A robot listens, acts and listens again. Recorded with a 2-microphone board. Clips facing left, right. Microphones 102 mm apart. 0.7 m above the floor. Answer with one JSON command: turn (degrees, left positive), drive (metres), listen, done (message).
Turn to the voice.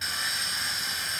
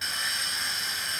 {"listen": true}
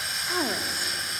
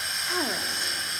{"turn": 30}
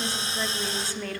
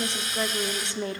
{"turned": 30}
{"turn": -25}
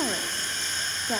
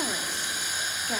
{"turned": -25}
{"turn": 20}
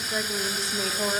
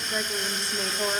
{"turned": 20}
{"done": "Facing the woman speaking, 1 to 2 m away."}